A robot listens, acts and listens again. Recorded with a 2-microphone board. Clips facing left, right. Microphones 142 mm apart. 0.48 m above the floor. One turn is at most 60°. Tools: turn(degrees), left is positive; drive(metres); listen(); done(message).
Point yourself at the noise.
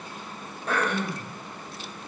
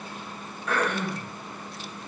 turn(degrees=35)
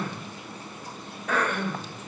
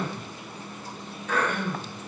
turn(degrees=60)
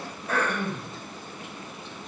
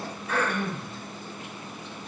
turn(degrees=55)
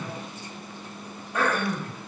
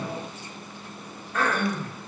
turn(degrees=15)
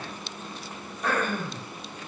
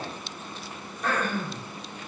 done("Facing the throat clearing, 1 to 2 m away.")